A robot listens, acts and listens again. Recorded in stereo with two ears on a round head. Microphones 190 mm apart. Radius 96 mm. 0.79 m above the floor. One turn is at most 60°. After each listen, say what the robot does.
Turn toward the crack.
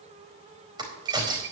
Turn 20° right.
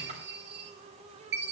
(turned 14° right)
Keep listening.
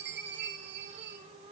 I heard a crack, but can't make it out now. It was about 10° right or 145° right.